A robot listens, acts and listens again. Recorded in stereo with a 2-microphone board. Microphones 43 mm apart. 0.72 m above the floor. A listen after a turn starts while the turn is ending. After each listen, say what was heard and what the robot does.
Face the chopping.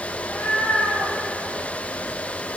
Keep listening.
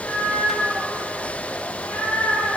Keep listening.
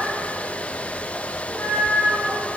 I can't make out chopping to turn to.